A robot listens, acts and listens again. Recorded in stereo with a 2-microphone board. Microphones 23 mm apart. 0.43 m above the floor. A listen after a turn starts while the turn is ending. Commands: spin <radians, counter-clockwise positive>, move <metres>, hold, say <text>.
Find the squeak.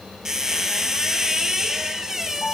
spin -0.35
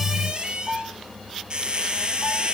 spin -2.44
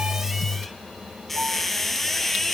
spin 0.17
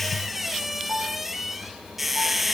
say Found it: a squeak, straight ahead.